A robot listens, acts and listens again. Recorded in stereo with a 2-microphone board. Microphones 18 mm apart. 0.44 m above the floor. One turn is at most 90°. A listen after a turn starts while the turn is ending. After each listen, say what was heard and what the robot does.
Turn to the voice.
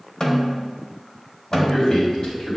The man speaking: about 50° left or 130° left. Turn 50° left.
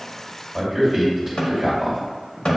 Facing the man speaking, 1 to 2 m away.